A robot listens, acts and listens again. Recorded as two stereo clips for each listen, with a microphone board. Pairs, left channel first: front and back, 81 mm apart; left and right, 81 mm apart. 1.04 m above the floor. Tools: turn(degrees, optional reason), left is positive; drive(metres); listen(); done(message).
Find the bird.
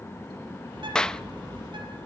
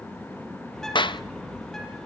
turn(degrees=175, reason="The bird: 175° left.")
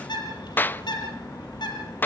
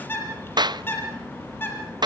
turn(degrees=25, reason="The bird is now 25° left.")
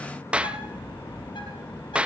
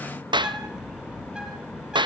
turn(degrees=-10, reason="The bird is now 10° right.")
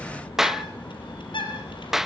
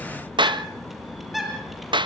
done("Found it: a bird, straight ahead, over 4 m away.")